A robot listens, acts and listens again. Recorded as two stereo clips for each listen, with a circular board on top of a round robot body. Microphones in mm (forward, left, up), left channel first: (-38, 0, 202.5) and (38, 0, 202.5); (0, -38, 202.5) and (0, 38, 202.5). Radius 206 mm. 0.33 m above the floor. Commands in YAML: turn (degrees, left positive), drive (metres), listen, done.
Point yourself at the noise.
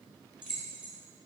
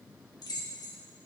turn: -75
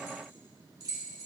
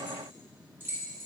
turn: 35
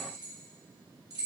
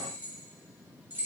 turn: 25
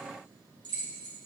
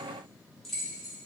done: "Facing the keys jangling."